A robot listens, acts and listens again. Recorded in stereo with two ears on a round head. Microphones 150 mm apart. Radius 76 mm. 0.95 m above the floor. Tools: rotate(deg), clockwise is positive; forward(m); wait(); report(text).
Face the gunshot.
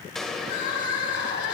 rotate(-30)
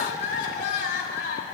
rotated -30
wait()
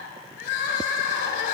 report("I heard a gunshot, but can't make it out now. It was about 25° right or 145° left.")